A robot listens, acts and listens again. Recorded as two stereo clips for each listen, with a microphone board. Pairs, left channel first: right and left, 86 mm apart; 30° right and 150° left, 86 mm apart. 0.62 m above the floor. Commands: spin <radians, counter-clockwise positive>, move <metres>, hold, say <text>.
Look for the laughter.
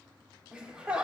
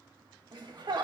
spin 2.88
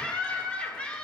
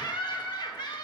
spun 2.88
spin -0.26
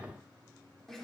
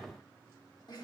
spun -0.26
say Facing the laughter.